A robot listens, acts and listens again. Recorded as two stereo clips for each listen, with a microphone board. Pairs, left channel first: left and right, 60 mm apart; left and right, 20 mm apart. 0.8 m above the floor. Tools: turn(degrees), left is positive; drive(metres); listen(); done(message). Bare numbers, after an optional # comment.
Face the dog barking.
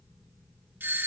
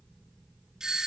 listen()
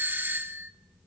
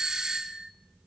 listen()
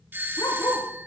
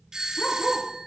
turn(90)
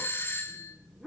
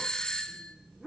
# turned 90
done("Found it: a dog barking, straight ahead.")